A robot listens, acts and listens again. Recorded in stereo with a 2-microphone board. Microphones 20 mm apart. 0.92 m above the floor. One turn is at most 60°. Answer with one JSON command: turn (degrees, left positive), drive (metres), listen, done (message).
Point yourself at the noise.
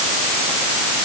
{"listen": true}
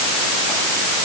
{"listen": true}
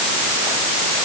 {"done": "I can't make out anything to turn to."}